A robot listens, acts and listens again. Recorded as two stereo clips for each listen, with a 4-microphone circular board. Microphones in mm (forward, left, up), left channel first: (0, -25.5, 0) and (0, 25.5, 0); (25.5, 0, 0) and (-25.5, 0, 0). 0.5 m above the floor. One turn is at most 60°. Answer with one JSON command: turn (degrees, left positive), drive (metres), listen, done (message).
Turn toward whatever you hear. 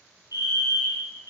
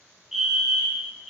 {"turn": 60}
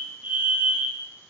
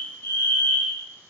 {"turn": 40}
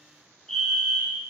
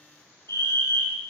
{"done": "Found it: a fire alarm, straight ahead."}